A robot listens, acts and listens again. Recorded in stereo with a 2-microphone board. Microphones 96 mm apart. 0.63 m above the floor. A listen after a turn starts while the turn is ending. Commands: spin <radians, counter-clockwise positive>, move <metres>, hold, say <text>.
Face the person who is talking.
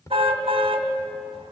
hold
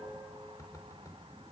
hold
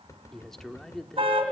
spin 0.52
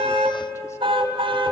hold
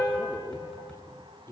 spin 2.53
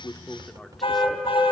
hold
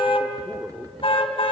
hold
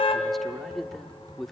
say Found it: a man speaking, straight ahead.